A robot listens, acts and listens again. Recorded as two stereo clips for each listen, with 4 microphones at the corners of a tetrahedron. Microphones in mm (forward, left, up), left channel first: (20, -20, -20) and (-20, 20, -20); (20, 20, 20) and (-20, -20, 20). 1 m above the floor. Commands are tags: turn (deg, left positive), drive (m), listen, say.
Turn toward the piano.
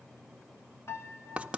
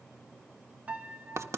<turn deg="-75"/>
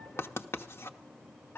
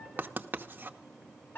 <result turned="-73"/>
<say>Found it: a piano, straight ahead.</say>